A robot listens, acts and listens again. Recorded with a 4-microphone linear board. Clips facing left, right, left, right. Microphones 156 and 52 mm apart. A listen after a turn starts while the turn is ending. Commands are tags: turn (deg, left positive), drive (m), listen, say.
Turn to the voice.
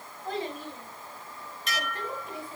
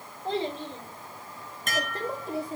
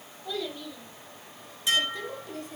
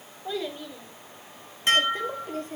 <turn deg="-40"/>
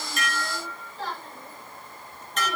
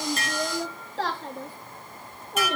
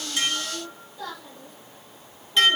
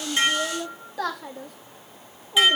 <turn deg="-100"/>
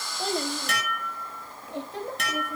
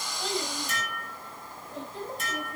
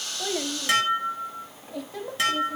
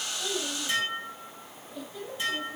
<turn deg="85"/>
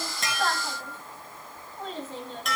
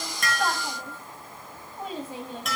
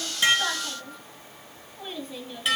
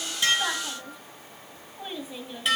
<turn deg="-15"/>
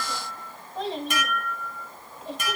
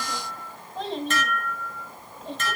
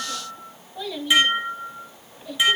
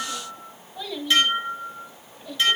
<say>Facing the child speaking, 1 to 2 m away.</say>